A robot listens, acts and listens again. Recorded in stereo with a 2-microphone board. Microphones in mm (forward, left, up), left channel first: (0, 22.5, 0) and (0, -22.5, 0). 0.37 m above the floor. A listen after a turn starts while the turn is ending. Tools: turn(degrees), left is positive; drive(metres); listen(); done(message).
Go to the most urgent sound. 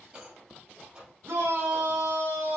turn(degrees=-50)
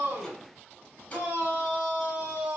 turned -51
turn(degrees=-15)
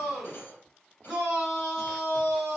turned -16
drive(metres=1.0)
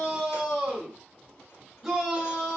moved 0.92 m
drive(metres=1.0)
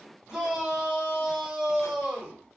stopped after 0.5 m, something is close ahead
done("I am next to the shout.")